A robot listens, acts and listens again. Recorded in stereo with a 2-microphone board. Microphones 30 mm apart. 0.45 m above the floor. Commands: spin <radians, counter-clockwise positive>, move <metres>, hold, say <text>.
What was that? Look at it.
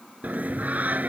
spin -1.05
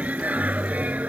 spin -1.05
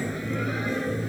say Found it: singing, straight ahead.